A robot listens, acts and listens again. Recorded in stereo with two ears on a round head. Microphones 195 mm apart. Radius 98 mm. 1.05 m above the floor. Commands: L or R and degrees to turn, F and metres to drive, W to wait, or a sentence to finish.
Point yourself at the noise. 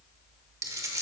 R15
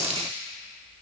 R150
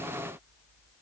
Facing where the dropped coin came from. I can't hear it now.